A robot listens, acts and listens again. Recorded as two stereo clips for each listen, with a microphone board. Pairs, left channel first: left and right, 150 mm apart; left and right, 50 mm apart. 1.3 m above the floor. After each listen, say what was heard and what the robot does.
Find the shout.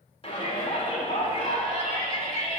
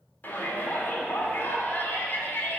The shout: about 35° left or 145° left. Turn 35° left.
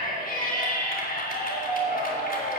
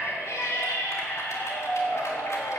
So it is at 105° left. Turn 105° left.
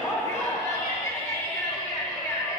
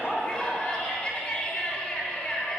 The shout is now 25° left. Turn 25° left.
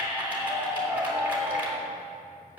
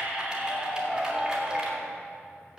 The shout is now 15° right. Turn 15° right.
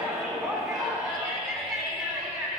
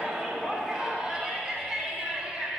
Facing the shout, 2 to 4 m away.